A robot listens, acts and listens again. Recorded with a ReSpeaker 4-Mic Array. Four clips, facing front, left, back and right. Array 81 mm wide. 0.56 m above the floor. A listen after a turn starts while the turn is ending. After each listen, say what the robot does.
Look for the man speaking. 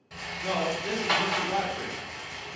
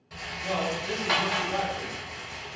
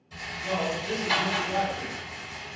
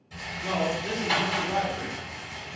Turn 25° right.
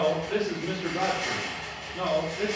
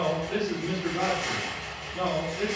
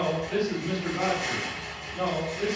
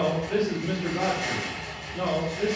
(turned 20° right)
Turn 50° left.
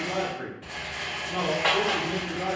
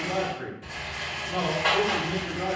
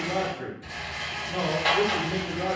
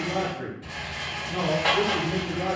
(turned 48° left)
Turn 60° left.
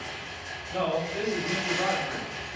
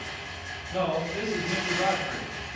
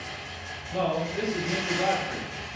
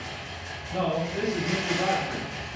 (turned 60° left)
Found it: a man speaking, straight ahead, 1 to 2 m away.